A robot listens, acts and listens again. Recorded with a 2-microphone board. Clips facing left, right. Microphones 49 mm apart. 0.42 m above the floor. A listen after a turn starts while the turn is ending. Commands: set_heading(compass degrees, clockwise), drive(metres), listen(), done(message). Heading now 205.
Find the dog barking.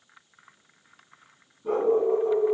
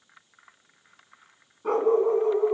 set_heading(270)
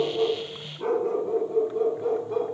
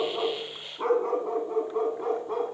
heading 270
set_heading(340)
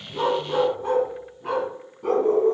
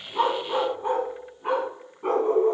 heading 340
set_heading(5)
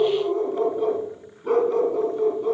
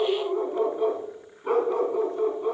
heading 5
set_heading(20)
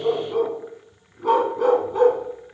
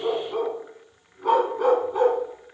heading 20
done("Facing the dog barking, 1 to 2 m away.")